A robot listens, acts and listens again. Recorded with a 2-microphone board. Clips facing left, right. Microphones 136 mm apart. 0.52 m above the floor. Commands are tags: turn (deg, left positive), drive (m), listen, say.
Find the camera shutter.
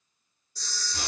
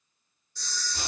<turn deg="35"/>
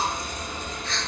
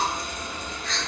<turn deg="105"/>
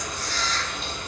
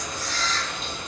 <turn deg="45"/>
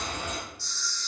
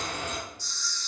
<turn deg="-20"/>
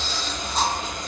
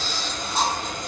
<listen/>
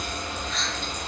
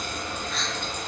<say>Found it: a camera shutter, straight ahead, under 1 m away.</say>